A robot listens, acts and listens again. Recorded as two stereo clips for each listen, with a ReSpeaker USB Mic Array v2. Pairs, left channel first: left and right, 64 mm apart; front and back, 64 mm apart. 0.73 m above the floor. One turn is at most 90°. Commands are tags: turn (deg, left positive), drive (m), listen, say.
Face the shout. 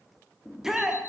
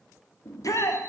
<turn deg="-10"/>
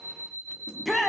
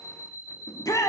<say>Found it: a shout, straight ahead.</say>